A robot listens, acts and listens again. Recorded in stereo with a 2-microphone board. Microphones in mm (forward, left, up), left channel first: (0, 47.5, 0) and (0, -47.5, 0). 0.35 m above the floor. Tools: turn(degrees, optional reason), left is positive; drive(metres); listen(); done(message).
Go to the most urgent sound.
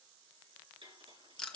listen()
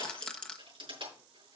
listen()
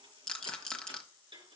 done("I can't make out anything urgent to turn to.")